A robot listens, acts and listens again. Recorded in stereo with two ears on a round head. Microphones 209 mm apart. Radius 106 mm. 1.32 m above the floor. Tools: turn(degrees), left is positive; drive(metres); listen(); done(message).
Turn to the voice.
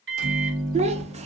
turn(degrees=-30)
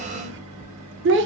turn(degrees=-120)
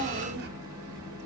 turn(degrees=-45)
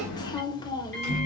turn(degrees=20)
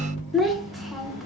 done("Found it: a child speaking, straight ahead.")